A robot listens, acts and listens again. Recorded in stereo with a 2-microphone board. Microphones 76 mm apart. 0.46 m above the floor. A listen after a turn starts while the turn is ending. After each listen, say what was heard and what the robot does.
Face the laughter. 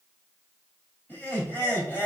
The laughter: about 30° left or 150° left. Turn 30° left.
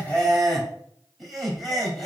Facing the laughter.